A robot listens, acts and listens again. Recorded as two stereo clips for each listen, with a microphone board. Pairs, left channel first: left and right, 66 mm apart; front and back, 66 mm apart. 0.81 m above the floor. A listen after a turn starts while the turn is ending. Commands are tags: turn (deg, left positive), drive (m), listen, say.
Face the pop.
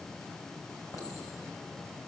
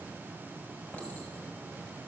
<listen/>
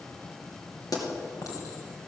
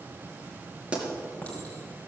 <turn deg="105"/>
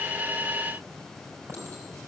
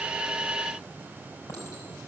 <say>Facing where the pop came from. I can't hear it now.</say>